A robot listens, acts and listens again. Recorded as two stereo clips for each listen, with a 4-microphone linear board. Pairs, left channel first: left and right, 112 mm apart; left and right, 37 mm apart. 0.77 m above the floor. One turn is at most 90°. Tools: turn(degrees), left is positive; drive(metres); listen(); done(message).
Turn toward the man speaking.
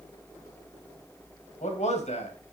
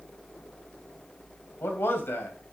turn(degrees=90)
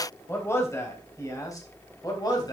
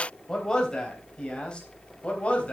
turn(degrees=35)
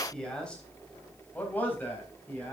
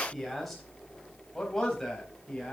turn(degrees=15)
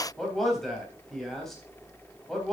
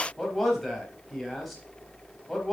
done("Facing the man speaking.")